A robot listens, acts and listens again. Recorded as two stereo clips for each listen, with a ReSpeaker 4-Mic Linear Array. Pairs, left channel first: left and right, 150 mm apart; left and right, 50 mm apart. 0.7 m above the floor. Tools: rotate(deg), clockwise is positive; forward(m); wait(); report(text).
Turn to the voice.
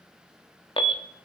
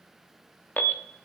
wait()
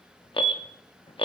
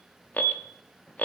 wait()
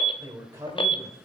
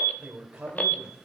rotate(20)
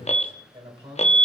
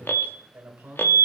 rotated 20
rotate(140)
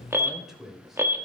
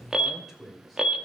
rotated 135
report("Facing the man speaking, 2 to 4 m away.")